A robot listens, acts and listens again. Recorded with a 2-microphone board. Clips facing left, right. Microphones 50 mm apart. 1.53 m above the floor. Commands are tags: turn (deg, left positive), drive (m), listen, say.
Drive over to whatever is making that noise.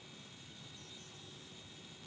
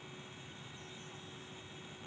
<listen/>
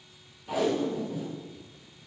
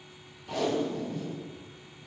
<turn deg="30"/>
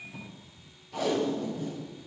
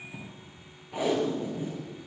<turn deg="-20"/>
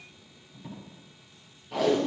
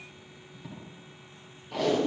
<drive m="1.0"/>
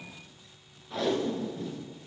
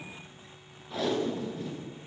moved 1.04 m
<drive m="1.0"/>
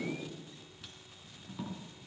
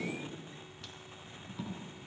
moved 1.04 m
<drive m="1.0"/>
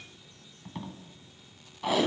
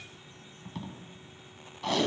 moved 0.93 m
<turn deg="15"/>
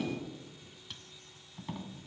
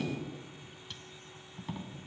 <drive m="1.0"/>
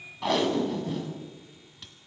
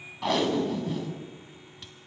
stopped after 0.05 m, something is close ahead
<say>I am next to the tape being pulled.</say>